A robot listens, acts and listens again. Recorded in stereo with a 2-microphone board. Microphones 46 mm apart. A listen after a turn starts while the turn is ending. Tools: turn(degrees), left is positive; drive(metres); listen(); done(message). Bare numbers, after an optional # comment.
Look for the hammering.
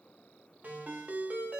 listen()
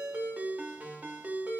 listen()
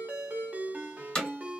# The hammering: about 20° left or 160° left.
turn(20)
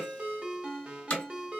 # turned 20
# So it is at 145° left.
turn(145)
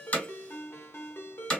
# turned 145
# The hammering is now 20° left.
turn(20)
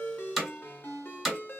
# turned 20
done("Facing the hammering.")